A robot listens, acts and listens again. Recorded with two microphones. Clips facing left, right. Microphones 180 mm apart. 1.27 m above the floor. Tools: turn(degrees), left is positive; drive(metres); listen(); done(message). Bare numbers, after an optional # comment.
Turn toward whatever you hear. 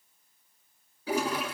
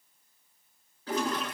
turn(30)
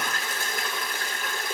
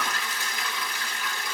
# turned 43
# So it is at 125° left.
turn(125)
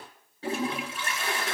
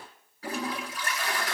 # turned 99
# The toilet flushing is now 30° left.
turn(30)
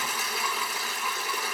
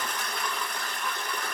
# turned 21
done("Found it: a toilet flushing, straight ahead.")